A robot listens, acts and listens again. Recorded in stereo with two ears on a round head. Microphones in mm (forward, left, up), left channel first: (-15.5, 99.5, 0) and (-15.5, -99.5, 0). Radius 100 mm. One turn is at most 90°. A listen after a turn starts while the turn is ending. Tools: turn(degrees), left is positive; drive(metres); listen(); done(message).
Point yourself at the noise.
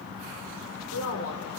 turn(degrees=90)
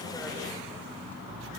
listen()
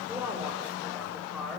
done("Found it: a woman speaking, straight ahead.")